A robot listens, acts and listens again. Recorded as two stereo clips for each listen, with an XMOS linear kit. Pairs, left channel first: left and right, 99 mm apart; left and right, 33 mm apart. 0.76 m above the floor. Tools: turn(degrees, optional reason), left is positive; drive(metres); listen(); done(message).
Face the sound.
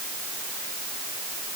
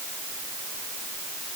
listen()
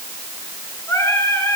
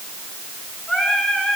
turn(degrees=30, reason="The singing: about 30° left or 150° left.")
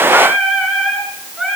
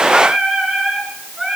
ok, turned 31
done("Facing the singing, over 4 m away.")